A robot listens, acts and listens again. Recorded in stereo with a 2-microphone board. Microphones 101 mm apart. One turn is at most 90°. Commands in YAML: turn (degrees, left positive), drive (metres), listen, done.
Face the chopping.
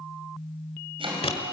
turn: -60
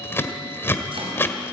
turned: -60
listen: true
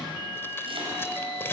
listen: true
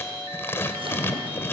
done: "I heard chopping, but can't make it out now. It was about straight ahead or 60° right."